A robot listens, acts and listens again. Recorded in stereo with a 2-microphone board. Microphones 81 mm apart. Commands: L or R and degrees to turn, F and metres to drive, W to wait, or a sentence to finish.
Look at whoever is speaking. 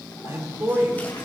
R25
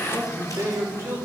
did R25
R40
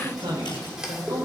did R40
R115
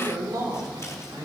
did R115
R65
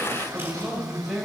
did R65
Facing the man speaking.